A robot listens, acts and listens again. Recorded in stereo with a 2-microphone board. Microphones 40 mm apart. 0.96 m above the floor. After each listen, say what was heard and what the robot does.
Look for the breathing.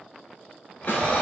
The breathing: about 45° left or 135° left. Turn 45° left.
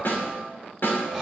Facing the breathing, 2 to 4 m away.